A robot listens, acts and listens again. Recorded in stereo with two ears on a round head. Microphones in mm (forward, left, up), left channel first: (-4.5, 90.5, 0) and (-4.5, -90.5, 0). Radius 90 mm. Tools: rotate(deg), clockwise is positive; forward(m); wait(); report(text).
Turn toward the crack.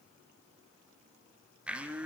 wait()
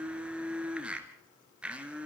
wait()
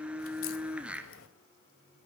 rotate(-70)
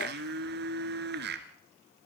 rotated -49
wait()
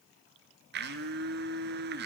report("I heard a crack, but can't make it out now. It was about 25° left or 60° left.")